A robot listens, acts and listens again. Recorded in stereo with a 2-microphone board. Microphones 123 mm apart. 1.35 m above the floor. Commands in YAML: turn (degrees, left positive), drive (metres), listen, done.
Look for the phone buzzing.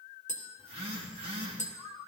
turn: -50
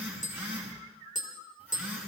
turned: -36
turn: -15
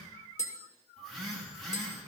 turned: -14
done: "Found it: a phone buzzing, straight ahead."